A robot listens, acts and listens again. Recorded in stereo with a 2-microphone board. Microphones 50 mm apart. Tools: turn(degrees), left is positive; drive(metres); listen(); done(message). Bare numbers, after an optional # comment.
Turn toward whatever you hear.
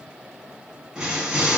turn(-30)
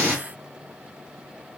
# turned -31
# So it is at 135° right.
turn(-135)
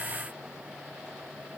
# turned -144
# Nothing new. It was at 10° left.
turn(10)
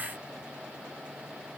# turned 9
done("Facing where the explosion came from. I can't hear it now.")